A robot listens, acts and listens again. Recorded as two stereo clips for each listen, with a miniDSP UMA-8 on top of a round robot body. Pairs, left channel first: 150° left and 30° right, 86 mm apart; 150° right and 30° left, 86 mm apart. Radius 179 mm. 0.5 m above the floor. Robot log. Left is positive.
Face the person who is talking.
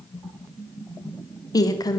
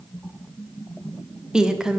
note: The woman speaking: 110° left.
cmd yaw +110
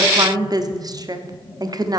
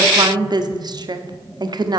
end: Found it: a woman speaking, straight ahead, 1 to 2 m away.